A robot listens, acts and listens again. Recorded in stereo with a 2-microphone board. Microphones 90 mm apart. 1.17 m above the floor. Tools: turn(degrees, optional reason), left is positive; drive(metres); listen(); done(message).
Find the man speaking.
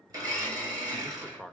turn(degrees=30)
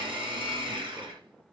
listen()
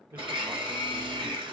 turn(degrees=-25, reason="So it is at 25° right.")
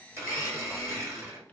listen()
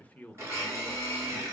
turn(degrees=20, reason="The man speaking is now 20° left.")
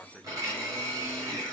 turn(degrees=10, reason="The man speaking is now 10° left.")
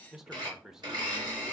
done("Facing the man speaking, under 1 m away.")